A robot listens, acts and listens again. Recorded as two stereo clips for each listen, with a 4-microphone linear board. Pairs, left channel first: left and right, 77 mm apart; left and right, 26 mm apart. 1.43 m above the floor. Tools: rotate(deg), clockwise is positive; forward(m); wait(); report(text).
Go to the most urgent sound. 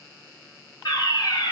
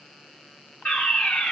rotate(-90)
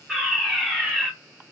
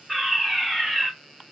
forward(1.0)
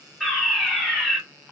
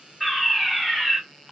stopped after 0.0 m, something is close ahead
report("Something is in my way. I am facing the fire alarm but have not reached it.")